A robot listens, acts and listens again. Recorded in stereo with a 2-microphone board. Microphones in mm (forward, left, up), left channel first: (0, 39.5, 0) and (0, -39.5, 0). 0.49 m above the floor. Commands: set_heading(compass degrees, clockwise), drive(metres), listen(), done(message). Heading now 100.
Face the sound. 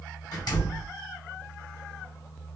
set_heading(35)
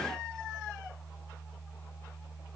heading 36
listen()
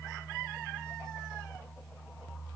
done("I heard a door slam, but can't make it out now. It was about straight ahead or 50° left.")